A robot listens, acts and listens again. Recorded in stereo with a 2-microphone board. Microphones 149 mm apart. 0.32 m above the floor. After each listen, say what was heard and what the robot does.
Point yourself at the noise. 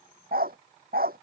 Turn 90° right.
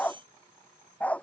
So it is at 10° left. Turn 10° left.
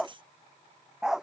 Found it: a dog barking, straight ahead.